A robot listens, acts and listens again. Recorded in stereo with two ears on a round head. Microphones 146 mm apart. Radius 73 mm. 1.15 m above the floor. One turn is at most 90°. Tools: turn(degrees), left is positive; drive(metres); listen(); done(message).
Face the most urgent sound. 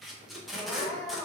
turn(degrees=30)
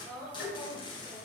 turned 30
turn(degrees=-25)
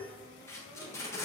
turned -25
listen()
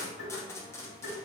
listen()
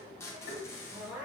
turn(degrees=-10)
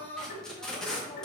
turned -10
done("Found it: crying, straight ahead.")